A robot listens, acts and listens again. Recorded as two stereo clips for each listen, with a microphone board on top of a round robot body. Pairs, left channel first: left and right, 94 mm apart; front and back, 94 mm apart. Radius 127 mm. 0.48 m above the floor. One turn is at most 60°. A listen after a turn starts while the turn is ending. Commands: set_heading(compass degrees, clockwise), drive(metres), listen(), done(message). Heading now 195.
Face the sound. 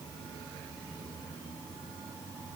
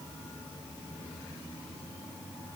listen()
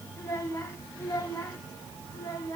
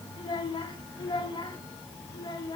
set_heading(160)
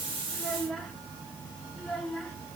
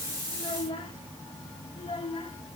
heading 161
done("Found it: a child speaking, straight ahead, over 4 m away.")